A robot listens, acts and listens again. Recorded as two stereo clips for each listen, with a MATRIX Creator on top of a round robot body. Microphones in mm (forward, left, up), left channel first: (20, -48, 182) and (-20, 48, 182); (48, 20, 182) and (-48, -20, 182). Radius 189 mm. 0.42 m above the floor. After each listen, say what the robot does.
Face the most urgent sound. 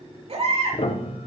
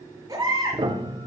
Turn 145° left.
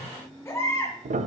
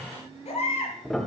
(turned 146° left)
Facing the baby crying, over 4 m away.